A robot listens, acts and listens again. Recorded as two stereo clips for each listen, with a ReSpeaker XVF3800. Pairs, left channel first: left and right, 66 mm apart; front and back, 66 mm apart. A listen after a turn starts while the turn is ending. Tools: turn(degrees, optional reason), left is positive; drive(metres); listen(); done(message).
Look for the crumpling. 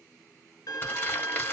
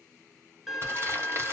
turn(degrees=140, reason="The crumpling: 140° left.")
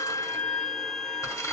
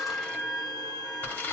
turn(degrees=60, reason="The crumpling is now 60° left.")
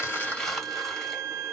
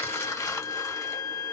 done("Facing the crumpling, 1 to 2 m away.")